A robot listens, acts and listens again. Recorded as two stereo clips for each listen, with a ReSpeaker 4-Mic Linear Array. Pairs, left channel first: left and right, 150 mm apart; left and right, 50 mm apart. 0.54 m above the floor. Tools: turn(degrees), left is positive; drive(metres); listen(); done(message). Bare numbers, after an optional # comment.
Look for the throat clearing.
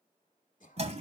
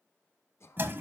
# The throat clearing: about 60° left or 120° left.
turn(60)
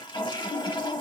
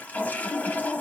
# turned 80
listen()
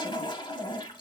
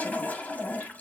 listen()
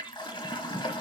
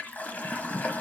done("I heard throat clearing, but can't make it out now. It was about 20° right or 40° left.")